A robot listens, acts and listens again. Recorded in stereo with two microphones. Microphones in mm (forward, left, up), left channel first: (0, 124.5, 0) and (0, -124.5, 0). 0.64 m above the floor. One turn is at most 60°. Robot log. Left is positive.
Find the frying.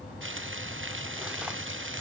note: The frying: about 55° right or 125° right.
cmd yaw -55
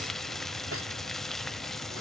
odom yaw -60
end: Found it: frying, straight ahead.